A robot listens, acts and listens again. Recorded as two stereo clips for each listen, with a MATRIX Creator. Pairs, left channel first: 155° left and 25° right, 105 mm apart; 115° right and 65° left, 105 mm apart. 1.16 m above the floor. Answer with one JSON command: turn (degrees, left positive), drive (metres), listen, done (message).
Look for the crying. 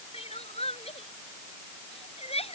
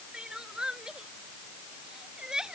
{"turn": 150}
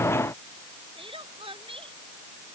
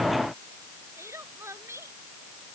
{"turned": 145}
{"done": "Found it: crying, straight ahead."}